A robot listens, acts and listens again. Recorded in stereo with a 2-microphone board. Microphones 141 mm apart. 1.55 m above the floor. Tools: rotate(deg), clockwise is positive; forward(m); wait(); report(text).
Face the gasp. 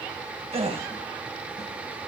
rotate(45)
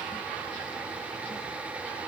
wait()
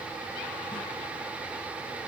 report("I heard a gasp, but can't make it out now. It was about straight ahead or 90° right.")